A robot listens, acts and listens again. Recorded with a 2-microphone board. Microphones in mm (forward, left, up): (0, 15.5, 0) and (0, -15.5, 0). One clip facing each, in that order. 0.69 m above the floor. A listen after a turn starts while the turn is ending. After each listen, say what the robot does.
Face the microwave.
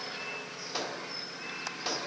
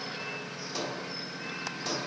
Turn 20° left.
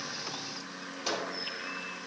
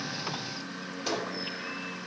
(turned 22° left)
Found it: a microwave, straight ahead, 2 to 4 m away.